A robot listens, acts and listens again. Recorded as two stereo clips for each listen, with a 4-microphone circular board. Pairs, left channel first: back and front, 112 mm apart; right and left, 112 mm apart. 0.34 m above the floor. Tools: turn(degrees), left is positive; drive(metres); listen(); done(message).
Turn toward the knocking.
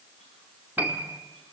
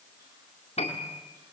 listen()
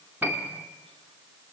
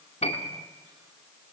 listen()
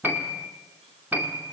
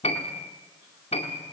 done("I can't make out knocking to turn to.")